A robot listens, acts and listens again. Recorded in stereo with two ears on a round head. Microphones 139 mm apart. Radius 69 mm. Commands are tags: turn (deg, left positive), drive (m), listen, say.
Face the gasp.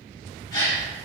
<turn deg="25"/>
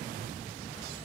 <listen/>
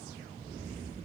<say>I heard a gasp, but can't make it out now. It was about straight ahead or 130° left.</say>